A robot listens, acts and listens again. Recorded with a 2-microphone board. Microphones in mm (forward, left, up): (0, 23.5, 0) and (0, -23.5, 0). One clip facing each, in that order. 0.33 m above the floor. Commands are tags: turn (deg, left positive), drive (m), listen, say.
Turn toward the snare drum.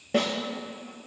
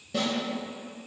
<turn deg="45"/>
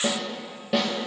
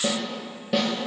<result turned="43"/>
<say>Found it: a snare drum, straight ahead, 2 to 4 m away.</say>